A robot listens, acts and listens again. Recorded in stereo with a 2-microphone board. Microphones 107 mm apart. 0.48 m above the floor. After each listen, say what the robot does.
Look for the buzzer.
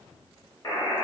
Turn 40° left.
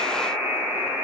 Facing the buzzer.